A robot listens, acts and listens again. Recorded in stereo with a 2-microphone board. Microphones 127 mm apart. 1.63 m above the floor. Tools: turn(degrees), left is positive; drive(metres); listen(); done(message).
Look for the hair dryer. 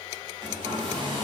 turn(degrees=-40)
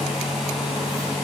done("Facing the hair dryer, over 4 m away.")